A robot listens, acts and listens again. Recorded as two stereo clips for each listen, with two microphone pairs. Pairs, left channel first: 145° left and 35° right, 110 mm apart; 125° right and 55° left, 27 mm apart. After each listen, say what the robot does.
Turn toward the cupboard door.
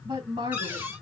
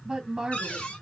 Turn 105° right.
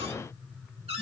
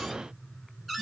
Turn 30° right.
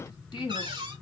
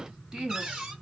Found it: a cupboard door, straight ahead, 1 to 2 m away.